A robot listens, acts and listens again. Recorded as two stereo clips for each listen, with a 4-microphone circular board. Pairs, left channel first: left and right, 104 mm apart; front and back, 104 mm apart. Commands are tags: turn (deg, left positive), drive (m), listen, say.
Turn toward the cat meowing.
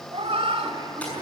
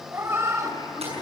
<turn deg="-120"/>
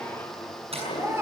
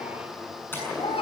<turn deg="-25"/>
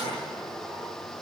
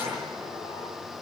<listen/>
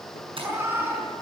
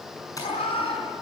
<turn deg="-20"/>
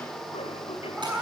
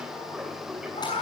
<turn deg="-10"/>
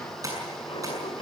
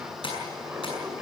<listen/>
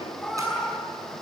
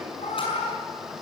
<say>Facing the cat meowing.</say>